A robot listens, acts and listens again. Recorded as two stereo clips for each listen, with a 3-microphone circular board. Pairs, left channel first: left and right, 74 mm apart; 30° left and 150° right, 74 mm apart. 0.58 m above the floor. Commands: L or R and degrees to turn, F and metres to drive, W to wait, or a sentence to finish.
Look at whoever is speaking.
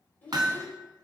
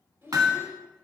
L165
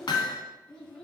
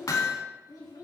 L15
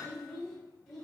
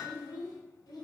L10
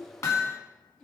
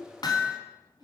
Facing the child speaking, 2 to 4 m away.